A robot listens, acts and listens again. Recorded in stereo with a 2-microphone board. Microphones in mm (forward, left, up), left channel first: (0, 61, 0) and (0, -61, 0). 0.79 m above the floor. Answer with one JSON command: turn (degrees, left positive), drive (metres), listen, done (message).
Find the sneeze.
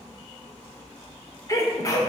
{"turn": 30}
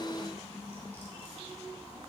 {"listen": true}
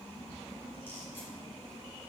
{"done": "I heard a sneeze, but can't make it out now. It was about straight ahead or 120° left."}